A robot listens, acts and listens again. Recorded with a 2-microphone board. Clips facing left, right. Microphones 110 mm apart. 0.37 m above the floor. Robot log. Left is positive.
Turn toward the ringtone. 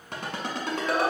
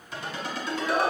note: The ringtone: about 60° left or 120° left.
cmd yaw +60
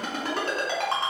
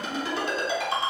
note: So it is at 60° left.
cmd yaw +60
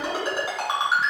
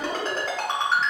note: The ringtone is now 10° left.
cmd yaw +10
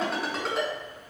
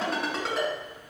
end: Found it: a ringtone, straight ahead.